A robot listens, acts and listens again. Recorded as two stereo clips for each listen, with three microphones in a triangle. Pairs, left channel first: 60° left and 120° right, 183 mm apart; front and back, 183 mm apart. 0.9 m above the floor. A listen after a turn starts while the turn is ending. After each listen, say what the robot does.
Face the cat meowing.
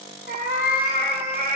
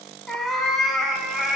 Turn 95° right.
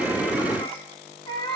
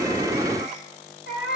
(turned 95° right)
Facing the cat meowing.